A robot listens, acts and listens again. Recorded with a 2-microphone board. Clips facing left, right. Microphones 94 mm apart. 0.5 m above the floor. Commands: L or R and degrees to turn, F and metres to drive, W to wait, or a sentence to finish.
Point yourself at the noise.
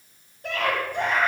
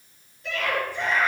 L50
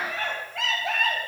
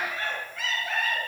L80
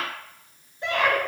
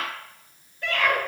L20
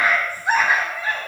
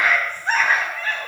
L10
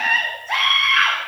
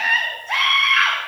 Facing the scream, 2 to 4 m away.